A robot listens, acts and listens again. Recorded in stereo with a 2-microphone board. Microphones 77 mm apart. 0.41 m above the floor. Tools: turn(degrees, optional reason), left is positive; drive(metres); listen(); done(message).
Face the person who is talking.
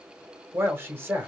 turn(degrees=-30, reason="The man speaking: about 30° right or 150° right.")
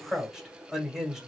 turn(degrees=-10, reason="So it is at 10° right.")
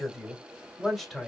done("Found it: a man speaking, straight ahead.")